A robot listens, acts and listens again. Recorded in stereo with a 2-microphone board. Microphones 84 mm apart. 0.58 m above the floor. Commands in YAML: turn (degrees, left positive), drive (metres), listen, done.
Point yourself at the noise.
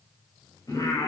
turn: 50
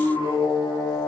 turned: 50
turn: 65
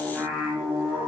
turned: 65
turn: -15
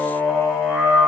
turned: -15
done: "Found it: singing, straight ahead, over 4 m away."